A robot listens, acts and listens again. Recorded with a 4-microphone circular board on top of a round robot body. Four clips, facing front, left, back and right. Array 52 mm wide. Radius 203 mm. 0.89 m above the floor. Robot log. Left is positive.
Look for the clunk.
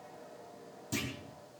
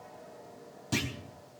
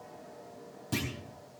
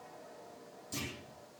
note: The clunk: 110° left.
cmd yaw +110
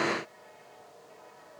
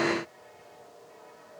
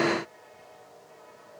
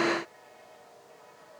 end: I heard a clunk from this way, but can't make it out now.